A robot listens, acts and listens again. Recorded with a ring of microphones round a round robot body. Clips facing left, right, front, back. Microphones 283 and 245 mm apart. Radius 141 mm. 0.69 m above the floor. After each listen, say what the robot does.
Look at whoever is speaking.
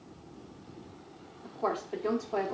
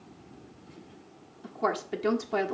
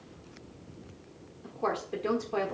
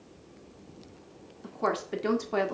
Turn 140° right.
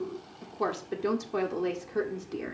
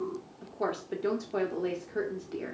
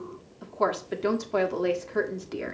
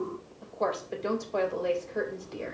Turn 15° left.
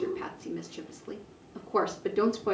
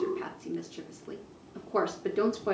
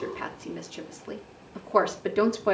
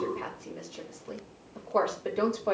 Found it: a woman speaking, straight ahead.